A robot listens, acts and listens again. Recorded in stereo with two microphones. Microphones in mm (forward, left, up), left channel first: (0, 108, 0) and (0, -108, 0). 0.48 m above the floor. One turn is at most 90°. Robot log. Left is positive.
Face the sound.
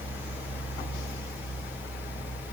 cmd idle
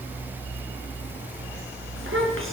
note: The child speaking: about 70° right or 110° right.
cmd yaw -70
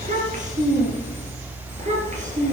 note: So it is at 35° right.
cmd yaw -35
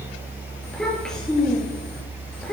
end: Facing the child speaking.